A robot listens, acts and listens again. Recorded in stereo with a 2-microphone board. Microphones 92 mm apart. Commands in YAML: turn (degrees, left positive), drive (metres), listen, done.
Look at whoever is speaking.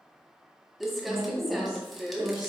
turn: -45
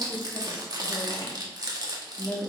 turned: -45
done: "Facing the woman speaking."